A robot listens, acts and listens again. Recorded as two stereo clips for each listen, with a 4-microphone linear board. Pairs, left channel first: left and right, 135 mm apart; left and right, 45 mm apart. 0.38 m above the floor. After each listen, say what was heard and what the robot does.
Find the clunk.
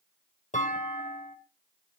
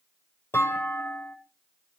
Turn 90° left.
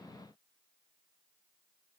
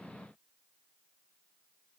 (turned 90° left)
Facing where the clunk came from. I can't hear it now.